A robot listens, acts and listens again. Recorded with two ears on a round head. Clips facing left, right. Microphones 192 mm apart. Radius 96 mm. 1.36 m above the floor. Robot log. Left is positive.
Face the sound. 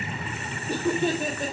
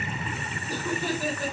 note: The laughter: about 20° left or 160° left.
cmd yaw +20
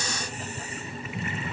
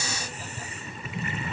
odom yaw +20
cmd idle
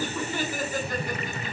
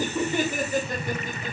note: So it is at 20° right.
cmd yaw -20
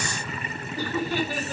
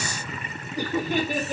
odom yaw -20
note: The laughter is now 20° right.
cmd yaw -20
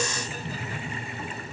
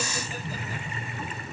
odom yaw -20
cmd idle
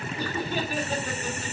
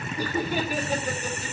note: The laughter is now 10° right.
cmd yaw -10
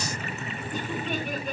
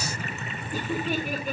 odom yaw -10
cmd idle
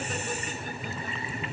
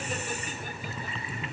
cmd idle
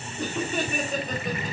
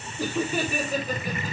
end: Facing the laughter.